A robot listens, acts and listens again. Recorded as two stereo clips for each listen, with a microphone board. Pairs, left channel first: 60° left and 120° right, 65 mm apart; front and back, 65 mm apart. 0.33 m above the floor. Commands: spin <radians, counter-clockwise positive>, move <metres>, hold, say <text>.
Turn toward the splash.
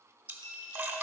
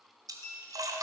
spin -3.05
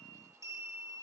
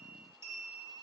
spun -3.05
say I heard a splash from this way, but can't make it out now.